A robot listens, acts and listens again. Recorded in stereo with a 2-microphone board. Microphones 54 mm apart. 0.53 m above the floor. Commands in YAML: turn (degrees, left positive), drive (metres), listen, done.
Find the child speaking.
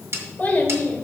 turn: 30
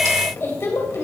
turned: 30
turn: 115
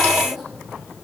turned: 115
listen: true
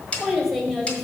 done: "Found it: a child speaking, straight ahead."